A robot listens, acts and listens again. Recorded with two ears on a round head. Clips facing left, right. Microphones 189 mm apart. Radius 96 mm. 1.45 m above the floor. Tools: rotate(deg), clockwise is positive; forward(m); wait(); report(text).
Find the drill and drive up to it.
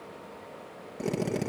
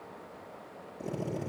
rotate(-90)
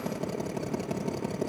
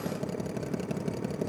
rotate(10)
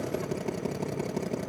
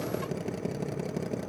forward(1.0)
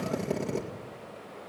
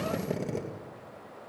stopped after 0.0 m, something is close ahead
report("Blocked. The drill is further on, straight ahead.")